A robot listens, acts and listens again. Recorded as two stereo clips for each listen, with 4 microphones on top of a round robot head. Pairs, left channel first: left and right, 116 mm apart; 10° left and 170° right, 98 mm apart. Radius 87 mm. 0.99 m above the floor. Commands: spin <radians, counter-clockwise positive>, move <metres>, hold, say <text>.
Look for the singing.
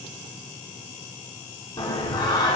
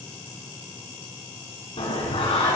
spin 0.61
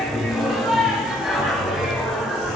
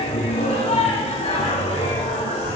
say Facing the singing.